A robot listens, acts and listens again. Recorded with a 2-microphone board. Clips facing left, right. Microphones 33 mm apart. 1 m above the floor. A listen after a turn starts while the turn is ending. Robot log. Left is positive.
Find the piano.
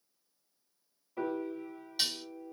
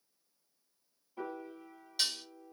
note: The piano: about 60° left or 120° left.
cmd yaw +60
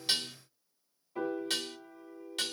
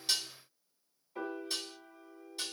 end: Found it: a piano, straight ahead.